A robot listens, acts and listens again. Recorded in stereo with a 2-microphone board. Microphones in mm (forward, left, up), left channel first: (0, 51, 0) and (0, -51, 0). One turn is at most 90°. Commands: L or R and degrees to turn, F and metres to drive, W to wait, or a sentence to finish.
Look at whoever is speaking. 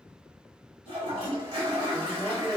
R15
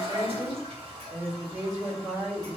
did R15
R90
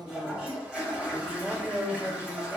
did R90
R50
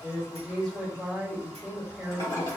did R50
Facing the woman speaking, 1 to 2 m away.